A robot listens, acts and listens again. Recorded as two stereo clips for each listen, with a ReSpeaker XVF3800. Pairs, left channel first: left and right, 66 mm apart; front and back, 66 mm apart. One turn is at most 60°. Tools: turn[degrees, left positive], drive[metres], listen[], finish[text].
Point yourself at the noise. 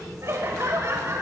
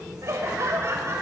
Thought: The laughter: 135° right.
Action: turn[-60]
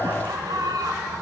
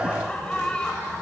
Thought: The laughter is now 75° right.
Action: turn[-60]
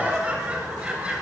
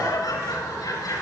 Thought: The laughter is now 20° right.
Action: turn[-20]
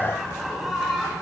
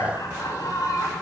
Action: finish[Facing the laughter, over 4 m away.]